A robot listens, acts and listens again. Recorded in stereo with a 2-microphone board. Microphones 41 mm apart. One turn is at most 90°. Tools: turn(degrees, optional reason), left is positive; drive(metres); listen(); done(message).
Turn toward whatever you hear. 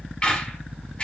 turn(degrees=30, reason="The squeak: about 30° left or 150° left.")
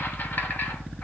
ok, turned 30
turn(degrees=90, reason="So it is at 115° left.")
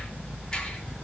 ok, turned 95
turn(degrees=20, reason="The squeak is now 20° left.")
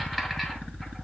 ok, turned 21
done("Found it: a squeak, straight ahead, 1 to 2 m away.")